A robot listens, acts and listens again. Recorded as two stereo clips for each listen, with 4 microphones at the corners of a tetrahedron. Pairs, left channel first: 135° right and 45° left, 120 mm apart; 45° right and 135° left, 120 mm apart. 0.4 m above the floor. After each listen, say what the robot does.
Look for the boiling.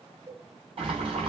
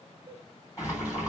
Turn 15° left.
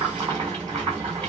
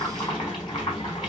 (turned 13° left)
Facing the boiling, 2 to 4 m away.